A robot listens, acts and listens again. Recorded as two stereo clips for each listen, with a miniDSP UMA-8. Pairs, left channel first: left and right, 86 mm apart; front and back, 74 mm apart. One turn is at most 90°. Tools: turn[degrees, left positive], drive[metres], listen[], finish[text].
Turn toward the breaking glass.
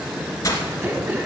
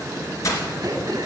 Thought: The breaking glass: 40° left.
Action: turn[40]
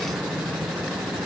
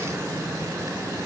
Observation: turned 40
Action: finish[Facing where the breaking glass came from. I can't hear it now.]